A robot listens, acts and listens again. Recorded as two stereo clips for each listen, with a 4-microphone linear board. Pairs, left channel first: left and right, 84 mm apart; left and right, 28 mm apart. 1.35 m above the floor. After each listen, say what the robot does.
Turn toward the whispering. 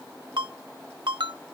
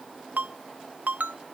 Keep listening.
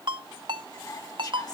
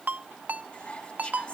Turn 50° left.
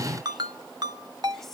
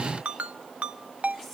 Facing the whispering.